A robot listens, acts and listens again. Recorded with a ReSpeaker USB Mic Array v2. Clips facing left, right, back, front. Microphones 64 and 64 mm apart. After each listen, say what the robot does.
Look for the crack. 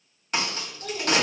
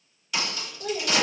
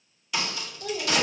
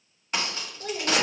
Turn 50° left.
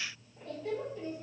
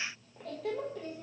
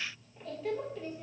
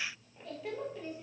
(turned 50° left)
I heard a crack from this way, but can't make it out now.